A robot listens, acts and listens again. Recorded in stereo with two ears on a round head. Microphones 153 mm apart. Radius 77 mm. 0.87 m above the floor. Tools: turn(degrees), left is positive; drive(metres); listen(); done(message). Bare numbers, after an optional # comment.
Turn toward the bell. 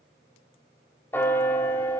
turn(30)
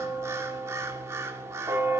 # So it is at 20° right.
turn(-20)
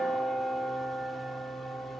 done("Found it: a bell, straight ahead.")